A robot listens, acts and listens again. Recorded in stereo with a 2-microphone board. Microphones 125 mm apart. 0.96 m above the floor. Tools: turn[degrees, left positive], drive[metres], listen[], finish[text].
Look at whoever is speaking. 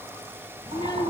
Thought: The child speaking: about 35° left or 145° left.
Action: turn[35]
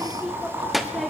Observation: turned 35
Action: finish[Facing the child speaking.]